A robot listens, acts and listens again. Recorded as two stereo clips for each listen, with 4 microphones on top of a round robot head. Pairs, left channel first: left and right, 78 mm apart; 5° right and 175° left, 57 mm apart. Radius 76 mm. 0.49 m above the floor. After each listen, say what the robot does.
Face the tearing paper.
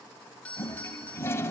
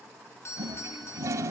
Keep listening.
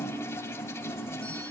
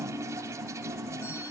Keep listening.
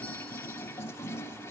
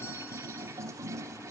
I can't make out tearing paper to turn to.